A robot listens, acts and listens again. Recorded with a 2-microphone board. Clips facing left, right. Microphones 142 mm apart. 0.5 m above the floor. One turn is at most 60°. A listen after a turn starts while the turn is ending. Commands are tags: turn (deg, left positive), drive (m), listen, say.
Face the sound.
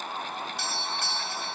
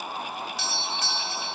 <turn deg="60"/>
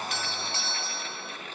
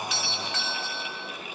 <turn deg="45"/>
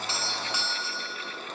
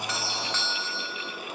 <turn deg="15"/>
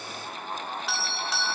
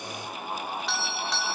<say>Found it: a doorbell, straight ahead, 2 to 4 m away.</say>